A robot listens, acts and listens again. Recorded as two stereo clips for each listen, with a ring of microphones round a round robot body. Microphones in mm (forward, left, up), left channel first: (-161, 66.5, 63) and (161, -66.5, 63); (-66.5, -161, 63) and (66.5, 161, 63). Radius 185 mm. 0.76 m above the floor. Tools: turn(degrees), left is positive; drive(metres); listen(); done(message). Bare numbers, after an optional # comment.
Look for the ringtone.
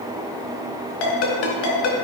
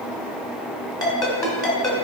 # The ringtone: 165° left.
turn(165)
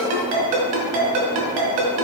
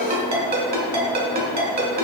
done("Facing the ringtone, 2 to 4 m away.")